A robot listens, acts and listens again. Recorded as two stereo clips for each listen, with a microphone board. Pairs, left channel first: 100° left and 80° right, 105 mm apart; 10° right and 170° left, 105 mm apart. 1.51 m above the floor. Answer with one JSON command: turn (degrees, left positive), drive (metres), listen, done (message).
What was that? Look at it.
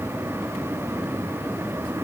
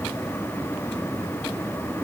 {"listen": true}
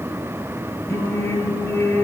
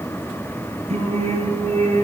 {"turn": 165}
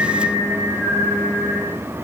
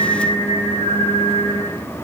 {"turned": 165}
{"done": "Found it: singing, straight ahead."}